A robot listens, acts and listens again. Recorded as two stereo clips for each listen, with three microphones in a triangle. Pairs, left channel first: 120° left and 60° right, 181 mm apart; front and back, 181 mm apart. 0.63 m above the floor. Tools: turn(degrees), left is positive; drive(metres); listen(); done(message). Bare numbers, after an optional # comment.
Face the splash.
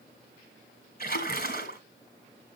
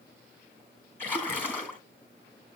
# The splash: 80° left.
turn(80)
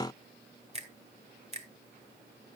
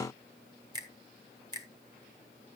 done("I heard a splash from this way, but can't make it out now.")